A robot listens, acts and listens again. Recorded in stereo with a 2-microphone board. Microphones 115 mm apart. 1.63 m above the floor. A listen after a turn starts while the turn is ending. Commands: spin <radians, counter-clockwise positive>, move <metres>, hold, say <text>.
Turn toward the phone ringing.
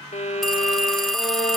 spin 0.52
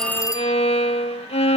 spin 2.62
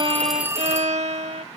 spin -0.44
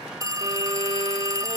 spin -0.52
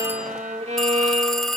say Facing the phone ringing.